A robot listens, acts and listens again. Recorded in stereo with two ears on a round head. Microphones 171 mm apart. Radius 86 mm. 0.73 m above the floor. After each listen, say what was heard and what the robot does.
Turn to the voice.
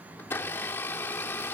Keep listening.
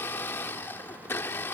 Keep listening.
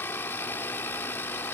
I can't make out anyone speaking to turn to.